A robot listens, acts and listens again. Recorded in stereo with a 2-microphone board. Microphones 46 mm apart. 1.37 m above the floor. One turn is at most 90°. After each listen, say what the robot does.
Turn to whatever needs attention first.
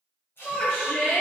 Turn 35° left.
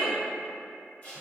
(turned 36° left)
Turn 90° left.
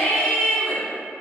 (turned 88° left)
Turn 20° left.
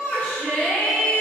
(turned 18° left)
Facing the shout, 1 to 2 m away.